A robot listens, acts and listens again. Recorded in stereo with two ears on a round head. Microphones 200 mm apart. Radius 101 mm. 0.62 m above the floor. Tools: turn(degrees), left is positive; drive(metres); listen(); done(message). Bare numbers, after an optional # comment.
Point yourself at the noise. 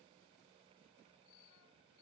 listen()
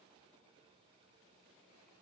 listen()
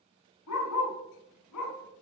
turn(90)
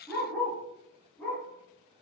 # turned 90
# So it is at 10° left.
turn(10)
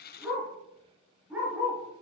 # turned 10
done("Facing the dog barking, 2 to 4 m away.")